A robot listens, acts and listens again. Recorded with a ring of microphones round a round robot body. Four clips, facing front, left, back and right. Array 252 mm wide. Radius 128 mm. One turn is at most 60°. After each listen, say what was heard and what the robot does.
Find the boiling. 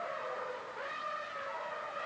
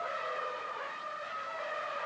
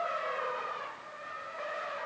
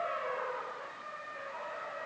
Keep listening.
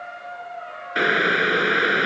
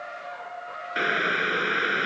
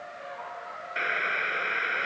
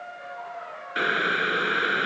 Facing the boiling.